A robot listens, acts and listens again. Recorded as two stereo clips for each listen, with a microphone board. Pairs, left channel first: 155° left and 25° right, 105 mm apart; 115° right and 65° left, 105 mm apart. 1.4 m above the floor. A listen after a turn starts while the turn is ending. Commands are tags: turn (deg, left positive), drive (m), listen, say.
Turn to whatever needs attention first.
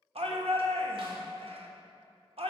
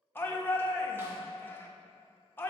<turn deg="-40"/>
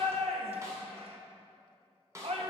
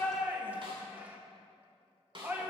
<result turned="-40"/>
<turn deg="-10"/>
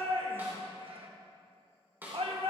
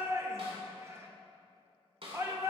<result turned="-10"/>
<say>Facing the shout, 1 to 2 m away.</say>